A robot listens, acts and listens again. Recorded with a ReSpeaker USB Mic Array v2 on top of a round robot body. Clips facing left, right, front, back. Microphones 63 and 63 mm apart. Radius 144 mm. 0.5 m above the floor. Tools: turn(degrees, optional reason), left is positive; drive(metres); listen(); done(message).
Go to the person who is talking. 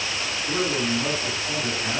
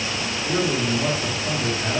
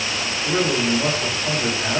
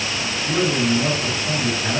turn(degrees=-15, reason="The man speaking: 15° right.")
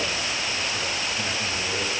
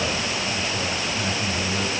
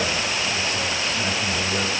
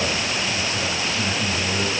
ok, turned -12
listen()
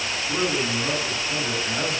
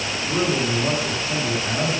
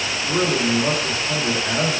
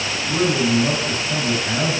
drive(metres=1.0)
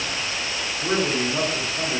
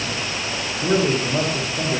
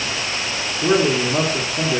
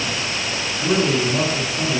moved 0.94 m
drive(metres=1.0)
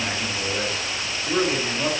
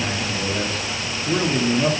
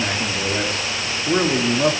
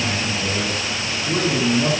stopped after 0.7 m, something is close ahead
done("I am next to the man speaking.")